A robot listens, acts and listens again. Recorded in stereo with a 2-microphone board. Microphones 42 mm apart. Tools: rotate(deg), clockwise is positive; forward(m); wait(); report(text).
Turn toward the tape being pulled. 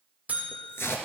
rotate(-70)
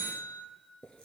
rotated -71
wait()
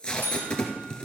rotate(-25)
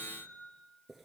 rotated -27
wait()
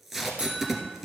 report("Facing the tape being pulled.")